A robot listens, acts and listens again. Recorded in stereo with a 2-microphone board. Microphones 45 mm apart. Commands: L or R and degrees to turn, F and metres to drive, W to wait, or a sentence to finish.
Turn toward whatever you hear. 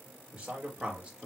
R15
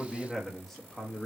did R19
L15
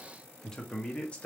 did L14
L30
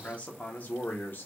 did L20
L40
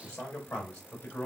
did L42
L30
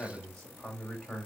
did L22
L15
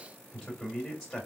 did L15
Facing the man speaking.